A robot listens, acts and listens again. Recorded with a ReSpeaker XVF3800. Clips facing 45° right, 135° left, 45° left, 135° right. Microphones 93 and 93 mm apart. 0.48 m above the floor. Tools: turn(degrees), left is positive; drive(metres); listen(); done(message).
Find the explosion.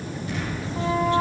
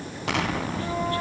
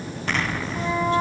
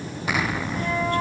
turn(degrees=145)
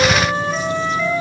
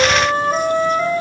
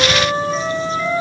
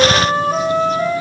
done("I heard an explosion from this way, but can't make it out now.")